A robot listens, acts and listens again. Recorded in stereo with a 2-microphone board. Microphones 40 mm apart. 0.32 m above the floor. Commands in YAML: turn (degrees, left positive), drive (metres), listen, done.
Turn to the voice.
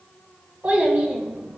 turn: -35
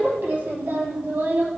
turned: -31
turn: -110
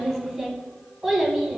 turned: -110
done: "Facing the child speaking, 1 to 2 m away."